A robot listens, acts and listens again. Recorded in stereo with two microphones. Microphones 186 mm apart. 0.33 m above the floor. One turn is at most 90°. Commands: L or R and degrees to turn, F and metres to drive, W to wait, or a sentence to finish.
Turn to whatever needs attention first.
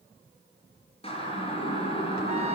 L30
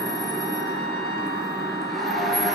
Found it: a siren, straight ahead.